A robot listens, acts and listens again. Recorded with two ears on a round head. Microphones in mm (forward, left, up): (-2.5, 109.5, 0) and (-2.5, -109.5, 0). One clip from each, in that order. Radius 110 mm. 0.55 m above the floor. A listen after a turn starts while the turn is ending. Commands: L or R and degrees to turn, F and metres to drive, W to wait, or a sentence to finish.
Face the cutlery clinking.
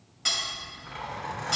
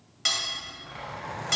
R25
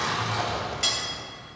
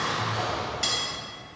Found it: cutlery clinking, straight ahead.